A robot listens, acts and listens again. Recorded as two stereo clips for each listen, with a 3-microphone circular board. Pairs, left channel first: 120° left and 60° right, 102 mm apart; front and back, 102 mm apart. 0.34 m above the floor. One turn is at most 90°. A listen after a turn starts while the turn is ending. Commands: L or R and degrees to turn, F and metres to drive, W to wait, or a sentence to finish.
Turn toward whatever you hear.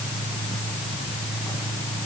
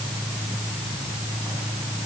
W
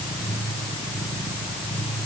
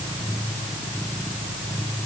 W
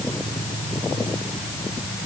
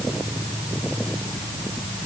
I can't make out anything to turn to.